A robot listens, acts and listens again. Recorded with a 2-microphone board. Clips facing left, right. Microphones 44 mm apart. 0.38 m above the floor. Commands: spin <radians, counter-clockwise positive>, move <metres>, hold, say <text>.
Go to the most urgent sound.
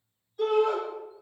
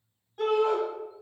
spin -1.05
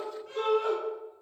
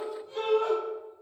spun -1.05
spin -0.87
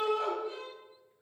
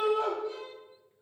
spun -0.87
spin 0.17
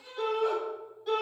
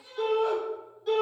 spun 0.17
move 1.0
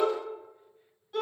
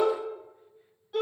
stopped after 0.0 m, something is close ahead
say Blocked. The shout is further on, straight ahead.